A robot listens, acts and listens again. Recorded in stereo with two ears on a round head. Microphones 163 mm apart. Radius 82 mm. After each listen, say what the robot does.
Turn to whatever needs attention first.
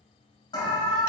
Turn 25° left.
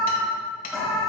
Facing the alarm, 1 to 2 m away.